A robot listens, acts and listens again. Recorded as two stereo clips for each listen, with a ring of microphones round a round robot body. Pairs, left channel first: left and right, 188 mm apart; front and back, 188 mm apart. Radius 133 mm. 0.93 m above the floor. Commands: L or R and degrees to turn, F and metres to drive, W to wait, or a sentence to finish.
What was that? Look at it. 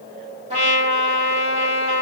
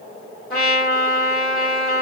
R35
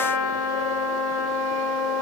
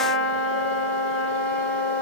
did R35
Found it: a trumpet, straight ahead.